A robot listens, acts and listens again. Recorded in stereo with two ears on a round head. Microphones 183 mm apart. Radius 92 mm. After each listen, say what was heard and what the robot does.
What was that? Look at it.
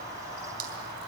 The dripping: about 50° right or 130° right. Turn 50° right.
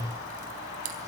So it is at 85° right. Turn 85° right.
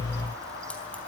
Keep listening.
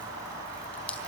Keep listening.
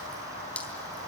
Found it: dripping, straight ahead.